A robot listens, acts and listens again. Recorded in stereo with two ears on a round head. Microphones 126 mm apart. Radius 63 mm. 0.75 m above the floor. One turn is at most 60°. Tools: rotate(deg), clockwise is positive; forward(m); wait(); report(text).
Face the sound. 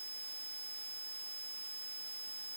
wait()
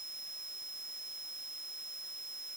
wait()
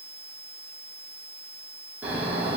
rotate(30)
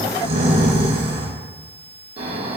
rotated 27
rotate(60)
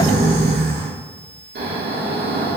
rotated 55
rotate(60)
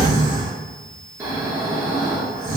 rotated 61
rotate(20)
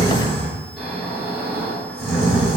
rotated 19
report("Facing the snoring.")